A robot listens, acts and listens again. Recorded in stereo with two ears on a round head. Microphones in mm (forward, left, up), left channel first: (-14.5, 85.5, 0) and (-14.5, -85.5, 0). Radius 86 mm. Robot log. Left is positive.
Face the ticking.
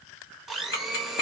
note: The ticking: about 55° left or 125° left.
cmd yaw +55
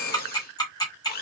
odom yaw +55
note: So it is at 25° left.
cmd yaw +25
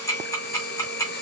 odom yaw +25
note: The ticking is now 20° left.
cmd yaw +20
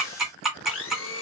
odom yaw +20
end: Found it: ticking, straight ahead, 1 to 2 m away.